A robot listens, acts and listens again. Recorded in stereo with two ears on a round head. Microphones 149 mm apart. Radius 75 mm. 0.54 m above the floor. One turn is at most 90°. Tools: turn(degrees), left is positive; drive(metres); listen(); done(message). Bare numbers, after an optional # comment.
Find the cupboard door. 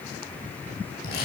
listen()
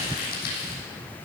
listen()
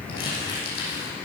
done("I can't make out a cupboard door to turn to.")